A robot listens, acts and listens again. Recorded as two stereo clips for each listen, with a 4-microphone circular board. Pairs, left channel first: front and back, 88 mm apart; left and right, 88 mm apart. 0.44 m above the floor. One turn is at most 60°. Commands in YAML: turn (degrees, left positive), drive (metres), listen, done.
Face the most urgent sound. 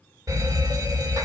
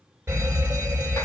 turn: -60
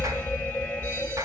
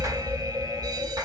turn: -60
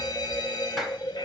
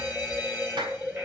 turn: -30
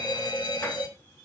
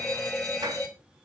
done: "Facing the fire alarm."